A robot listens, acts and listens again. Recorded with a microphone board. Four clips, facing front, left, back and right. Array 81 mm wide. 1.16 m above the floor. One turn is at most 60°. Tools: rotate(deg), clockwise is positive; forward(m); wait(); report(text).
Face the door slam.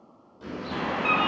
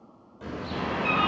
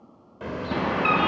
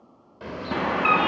rotate(60)
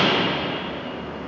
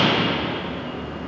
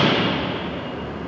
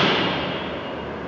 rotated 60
rotate(55)
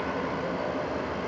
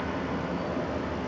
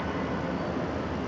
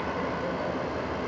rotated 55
report("Facing where the door slam came from. I can't hear it now.")